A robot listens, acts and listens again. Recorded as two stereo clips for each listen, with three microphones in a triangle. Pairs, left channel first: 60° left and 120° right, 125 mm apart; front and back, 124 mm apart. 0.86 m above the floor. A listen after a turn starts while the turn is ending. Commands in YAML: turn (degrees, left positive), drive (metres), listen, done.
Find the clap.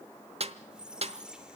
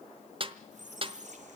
listen: true
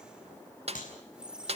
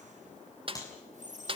turn: 65
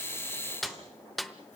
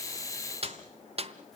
listen: true
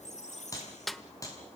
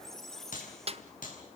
done: "Facing the clap, over 4 m away."